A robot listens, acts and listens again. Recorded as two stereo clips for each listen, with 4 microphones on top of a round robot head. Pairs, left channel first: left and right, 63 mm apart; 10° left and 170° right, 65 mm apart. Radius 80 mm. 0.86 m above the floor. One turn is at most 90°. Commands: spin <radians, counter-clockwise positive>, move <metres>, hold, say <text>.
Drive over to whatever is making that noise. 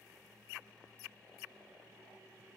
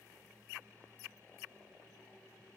hold
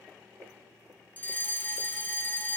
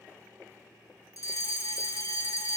spin 0.52
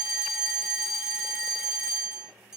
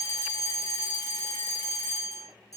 spin -0.17
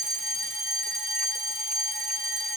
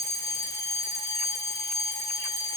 move 1.0
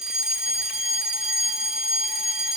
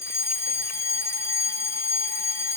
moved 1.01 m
spin -0.26
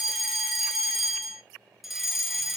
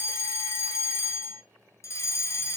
move 1.0
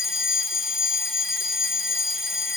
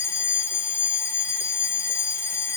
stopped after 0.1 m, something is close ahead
say Arrived at the fire alarm, straight ahead.